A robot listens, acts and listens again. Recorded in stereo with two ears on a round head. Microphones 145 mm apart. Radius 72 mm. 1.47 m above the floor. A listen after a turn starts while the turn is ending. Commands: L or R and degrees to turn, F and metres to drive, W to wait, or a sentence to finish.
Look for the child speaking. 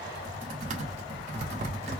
W
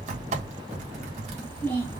L30
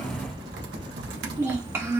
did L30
R20
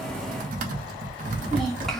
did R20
Facing the child speaking.